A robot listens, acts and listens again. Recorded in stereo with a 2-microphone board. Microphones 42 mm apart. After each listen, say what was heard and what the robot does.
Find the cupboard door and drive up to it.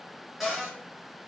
Turn 30° right.
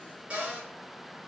So it is at 145° right. Turn 145° right.
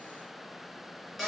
Drive 1.0 m forward.
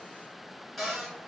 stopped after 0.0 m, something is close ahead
Something is in my way. I am facing the cupboard door but have not reached it.